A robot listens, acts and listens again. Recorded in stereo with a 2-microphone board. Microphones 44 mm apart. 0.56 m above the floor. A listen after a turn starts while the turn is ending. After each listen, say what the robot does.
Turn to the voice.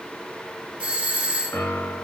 Keep listening.
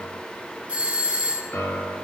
Keep listening.
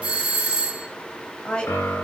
Turn 20° left.
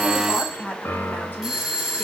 Turn 140° left.
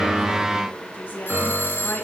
Turn 50° left.
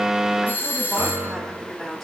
Facing the woman speaking, over 4 m away.